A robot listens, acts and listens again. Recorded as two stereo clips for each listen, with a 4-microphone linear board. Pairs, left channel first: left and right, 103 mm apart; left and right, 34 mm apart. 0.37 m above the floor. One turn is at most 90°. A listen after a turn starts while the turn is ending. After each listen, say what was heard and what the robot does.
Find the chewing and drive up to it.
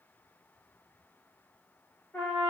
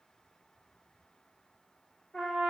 Keep listening.
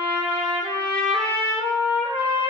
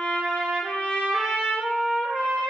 Keep listening.
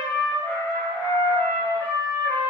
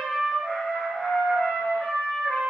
I can't make out chewing to turn to.